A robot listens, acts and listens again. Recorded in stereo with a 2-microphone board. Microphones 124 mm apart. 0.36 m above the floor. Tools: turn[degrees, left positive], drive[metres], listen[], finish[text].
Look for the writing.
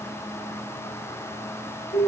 Action: listen[]
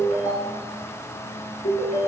Action: listen[]
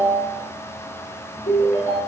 Action: finish[I can't make out writing, only a ringtone.]